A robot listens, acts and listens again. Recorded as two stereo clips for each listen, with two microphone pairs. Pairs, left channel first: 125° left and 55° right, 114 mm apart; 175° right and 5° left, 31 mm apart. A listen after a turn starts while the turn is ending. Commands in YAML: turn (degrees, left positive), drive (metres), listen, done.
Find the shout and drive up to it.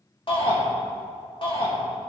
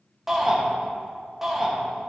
turn: 85
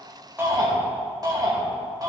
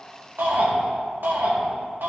drive: 1.0
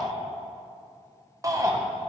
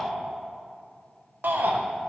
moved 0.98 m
drive: 1.0
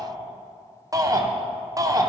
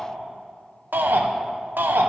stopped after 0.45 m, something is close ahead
done: "I am next to the shout."